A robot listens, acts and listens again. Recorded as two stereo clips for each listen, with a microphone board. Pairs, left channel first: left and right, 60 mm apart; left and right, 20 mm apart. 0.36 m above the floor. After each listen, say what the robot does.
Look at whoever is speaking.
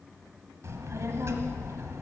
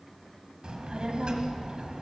Turn 55° right.
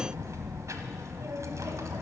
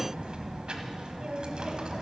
Turn 70° right.
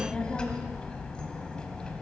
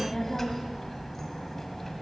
Turn 15° left.
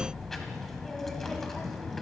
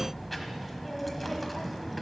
Found it: a child speaking, straight ahead, 1 to 2 m away.